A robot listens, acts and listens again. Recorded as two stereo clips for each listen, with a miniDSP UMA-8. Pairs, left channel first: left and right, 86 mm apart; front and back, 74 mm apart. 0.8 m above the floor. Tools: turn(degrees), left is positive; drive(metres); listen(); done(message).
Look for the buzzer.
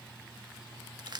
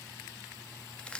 listen()
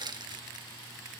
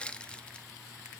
listen()
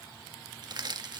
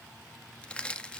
done("I can't make out a buzzer to turn to.")